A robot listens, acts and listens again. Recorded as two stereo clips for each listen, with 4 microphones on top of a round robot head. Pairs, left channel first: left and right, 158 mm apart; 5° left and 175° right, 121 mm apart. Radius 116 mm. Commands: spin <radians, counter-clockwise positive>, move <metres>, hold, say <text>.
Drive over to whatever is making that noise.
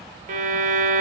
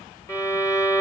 spin -1.13
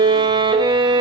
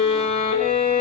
spin -0.61
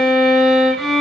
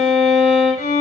move 1.0
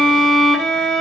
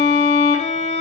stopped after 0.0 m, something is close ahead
say Blocked. The violin is further on, straight ahead.